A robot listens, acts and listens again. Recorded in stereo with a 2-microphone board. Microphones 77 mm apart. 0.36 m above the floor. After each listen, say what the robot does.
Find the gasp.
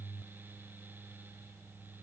Keep listening.
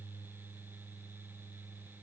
Keep listening.
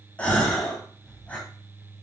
Turn 15° left.
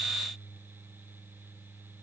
Keep listening.
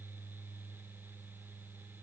I heard a gasp, but can't make it out now. It was about straight ahead or 150° left.